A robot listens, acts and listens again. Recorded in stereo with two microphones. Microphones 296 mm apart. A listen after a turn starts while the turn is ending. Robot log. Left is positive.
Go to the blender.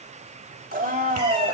note: The blender: about 30° right or 150° right.
cmd yaw -30
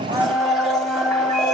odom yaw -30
cmd fwd 1.0
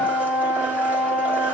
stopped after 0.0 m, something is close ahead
end: Blocked. The blender is further on, straight ahead.